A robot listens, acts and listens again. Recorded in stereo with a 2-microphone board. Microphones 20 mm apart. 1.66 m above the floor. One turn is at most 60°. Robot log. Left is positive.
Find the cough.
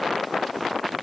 cmd idle
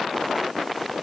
cmd idle
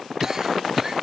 note: The cough: about 25° right or 155° right.
cmd yaw -25
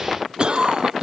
note: So it is at 130° right.
cmd yaw -60
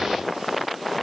note: Nothing new. It was at 70° right.
cmd yaw -60
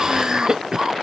note: The cough is now 40° right.
cmd yaw -40
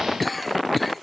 end: Facing the cough.